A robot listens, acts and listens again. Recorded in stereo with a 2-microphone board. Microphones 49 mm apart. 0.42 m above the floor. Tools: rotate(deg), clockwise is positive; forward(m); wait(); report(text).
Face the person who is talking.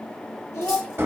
rotate(-60)
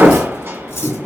wait()
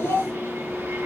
rotate(-60)
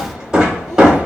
wait()
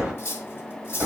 wait()
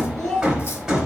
rotate(-10)
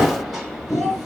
report("Facing the child speaking, 2 to 4 m away.")